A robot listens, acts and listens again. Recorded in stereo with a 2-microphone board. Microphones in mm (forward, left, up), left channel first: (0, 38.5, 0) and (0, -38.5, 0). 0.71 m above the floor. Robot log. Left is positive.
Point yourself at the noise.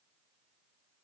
cmd idle
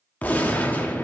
note: The gunshot: about 20° left or 160° left.
cmd yaw +20
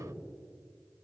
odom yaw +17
cmd idle
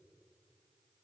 end: I heard a gunshot, but can't make it out now. It was about 5° left or 140° left.